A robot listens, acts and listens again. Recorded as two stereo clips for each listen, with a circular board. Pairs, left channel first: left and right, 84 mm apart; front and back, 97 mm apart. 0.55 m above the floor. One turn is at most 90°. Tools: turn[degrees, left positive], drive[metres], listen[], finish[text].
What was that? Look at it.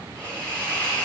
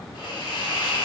Thought: The hiss: 20° left.
Action: turn[20]
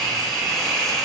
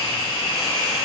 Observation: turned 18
Action: finish[Found it: a hiss, straight ahead.]